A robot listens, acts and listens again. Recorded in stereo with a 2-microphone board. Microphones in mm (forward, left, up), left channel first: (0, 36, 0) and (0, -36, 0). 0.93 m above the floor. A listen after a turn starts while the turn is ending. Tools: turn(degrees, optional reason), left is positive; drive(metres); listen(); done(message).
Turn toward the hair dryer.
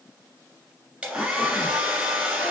turn(degrees=-30)
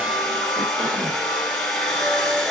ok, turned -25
turn(degrees=10, reason="So it is at 10° left.")
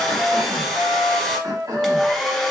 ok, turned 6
done("Facing the hair dryer, 1 to 2 m away.")